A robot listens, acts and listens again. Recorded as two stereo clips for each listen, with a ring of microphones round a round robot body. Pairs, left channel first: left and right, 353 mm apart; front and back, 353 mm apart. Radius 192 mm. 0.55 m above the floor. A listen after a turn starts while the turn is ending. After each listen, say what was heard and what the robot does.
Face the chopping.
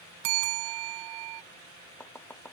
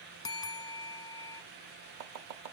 The chopping: 175° left. Turn 175° left.
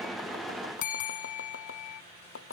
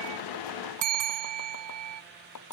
The chopping is now 35° left. Turn 35° left.
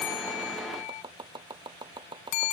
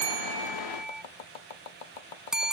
The chopping is now 10° right. Turn 10° right.
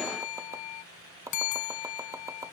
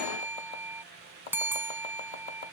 The chopping is now 10° right. Turn 10° right.
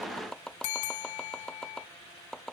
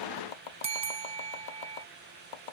Facing the chopping.